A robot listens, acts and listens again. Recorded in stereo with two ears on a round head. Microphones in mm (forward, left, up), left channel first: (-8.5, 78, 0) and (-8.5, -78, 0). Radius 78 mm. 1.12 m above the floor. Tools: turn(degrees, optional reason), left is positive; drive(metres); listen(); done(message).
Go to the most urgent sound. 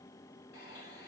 listen()
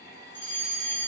turn(degrees=30)
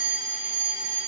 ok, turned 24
turn(degrees=-10, reason="So it is at 10° right.")
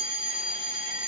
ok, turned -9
drive(metres=1.0)
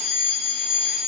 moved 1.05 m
drive(metres=1.0)
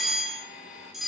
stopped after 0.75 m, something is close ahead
done("Arrived at the fire alarm, straight ahead.")